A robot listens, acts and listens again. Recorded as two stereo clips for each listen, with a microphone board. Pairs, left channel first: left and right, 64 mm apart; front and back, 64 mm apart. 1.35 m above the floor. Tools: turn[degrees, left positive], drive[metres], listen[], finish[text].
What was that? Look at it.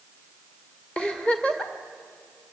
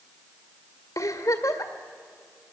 Thought: The giggle: 15° left.
Action: turn[15]
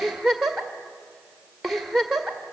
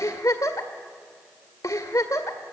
Action: finish[Found it: a giggle, straight ahead.]